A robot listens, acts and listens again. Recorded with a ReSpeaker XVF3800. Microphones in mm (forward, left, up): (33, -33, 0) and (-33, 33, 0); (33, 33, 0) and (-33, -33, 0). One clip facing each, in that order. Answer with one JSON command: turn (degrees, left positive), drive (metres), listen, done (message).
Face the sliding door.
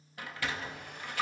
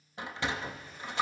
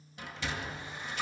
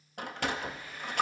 {"turn": -160}
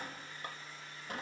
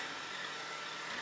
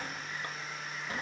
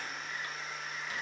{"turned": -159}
{"done": "Found it: a sliding door, straight ahead."}